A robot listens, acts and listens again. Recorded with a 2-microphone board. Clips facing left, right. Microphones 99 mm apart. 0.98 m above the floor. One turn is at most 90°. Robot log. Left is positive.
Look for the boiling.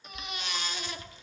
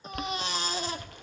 note: The boiling: about 60° right or 120° right.
cmd yaw -60
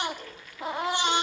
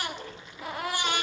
note: So it is at 25° right.
cmd yaw -25
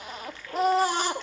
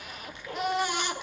note: The boiling is now 15° right.
cmd yaw -15
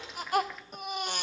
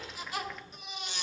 cmd idle
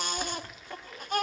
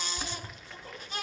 end: Found it: boiling, straight ahead, under 1 m away.